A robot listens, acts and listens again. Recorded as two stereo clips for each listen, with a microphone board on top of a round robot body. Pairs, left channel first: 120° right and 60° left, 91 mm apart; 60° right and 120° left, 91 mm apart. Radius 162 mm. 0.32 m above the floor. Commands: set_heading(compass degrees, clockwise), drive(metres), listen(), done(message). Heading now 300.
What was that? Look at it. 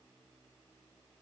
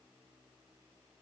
listen()
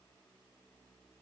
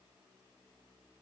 listen()
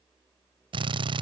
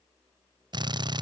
set_heading(215)
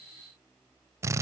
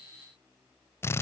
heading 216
done("Found it: a drill, straight ahead.")